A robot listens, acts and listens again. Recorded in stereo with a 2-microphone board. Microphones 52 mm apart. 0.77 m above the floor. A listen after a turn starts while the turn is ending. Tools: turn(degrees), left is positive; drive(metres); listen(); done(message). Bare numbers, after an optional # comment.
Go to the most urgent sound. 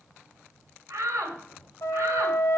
turn(-90)
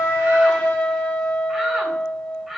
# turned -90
drive(1.0)
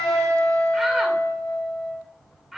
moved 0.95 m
drive(1.0)
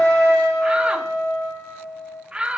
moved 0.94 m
# The shout is now 25° right.
turn(-25)
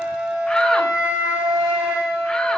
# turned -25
listen()
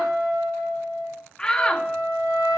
# The shout is now 15° left.
turn(15)
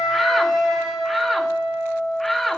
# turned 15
drive(1.0)
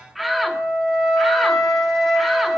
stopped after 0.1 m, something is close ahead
done("I am next to the shout.")